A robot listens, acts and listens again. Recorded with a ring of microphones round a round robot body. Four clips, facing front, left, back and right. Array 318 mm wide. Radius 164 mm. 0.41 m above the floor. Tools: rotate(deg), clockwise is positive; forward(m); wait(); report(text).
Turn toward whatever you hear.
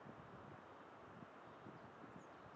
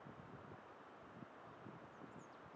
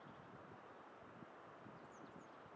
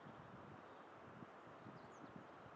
wait()
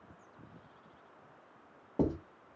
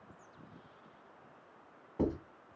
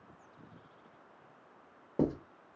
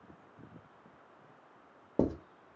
rotate(100)
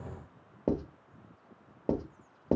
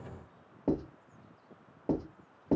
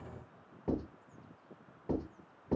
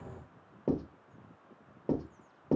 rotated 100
report("Facing the writing, 1 to 2 m away.")